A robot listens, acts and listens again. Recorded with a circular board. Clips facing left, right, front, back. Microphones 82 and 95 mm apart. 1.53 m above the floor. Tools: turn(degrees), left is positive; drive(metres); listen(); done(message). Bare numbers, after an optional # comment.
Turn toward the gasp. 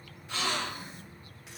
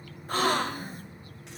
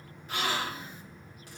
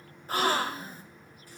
# The gasp: 130° right.
turn(-130)
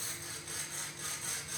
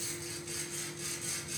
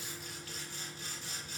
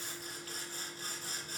done("I heard a gasp from this way, but can't make it out now.")